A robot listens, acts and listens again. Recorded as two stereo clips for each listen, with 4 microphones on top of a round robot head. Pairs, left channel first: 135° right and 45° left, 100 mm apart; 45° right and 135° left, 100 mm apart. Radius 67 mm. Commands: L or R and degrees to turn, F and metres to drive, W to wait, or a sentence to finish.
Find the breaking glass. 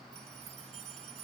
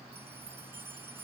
W
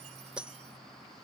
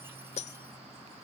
R35
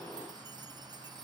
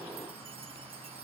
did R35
Facing where the breaking glass came from. I can't hear it now.